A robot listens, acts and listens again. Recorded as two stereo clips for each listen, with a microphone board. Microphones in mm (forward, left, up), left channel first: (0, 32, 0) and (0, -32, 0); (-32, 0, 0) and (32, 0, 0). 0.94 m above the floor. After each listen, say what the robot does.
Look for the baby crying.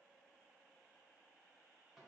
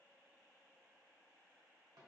Keep listening.
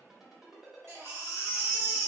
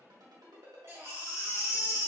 Turn 45° right.
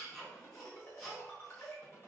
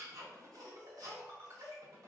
Found it: a baby crying, straight ahead.